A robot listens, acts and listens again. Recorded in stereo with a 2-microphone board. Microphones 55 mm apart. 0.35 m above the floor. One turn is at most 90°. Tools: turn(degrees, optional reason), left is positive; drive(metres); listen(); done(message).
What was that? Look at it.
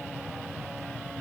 listen()
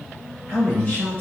turn(degrees=30, reason="The man speaking: about 30° left or 150° left.")
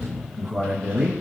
done("Facing the man speaking, 1 to 2 m away.")